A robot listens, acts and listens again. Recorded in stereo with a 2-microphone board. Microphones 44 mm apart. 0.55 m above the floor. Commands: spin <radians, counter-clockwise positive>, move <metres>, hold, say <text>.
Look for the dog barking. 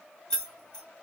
hold
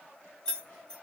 hold
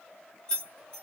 say I can't make out a dog barking to turn to.